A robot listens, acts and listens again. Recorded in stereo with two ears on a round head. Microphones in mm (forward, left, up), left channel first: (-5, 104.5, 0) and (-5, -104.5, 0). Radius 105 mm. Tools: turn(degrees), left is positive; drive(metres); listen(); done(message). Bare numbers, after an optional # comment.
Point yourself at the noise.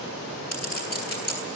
# The clink: about 45° left or 135° left.
turn(45)
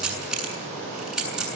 done("Facing the clink, over 4 m away.")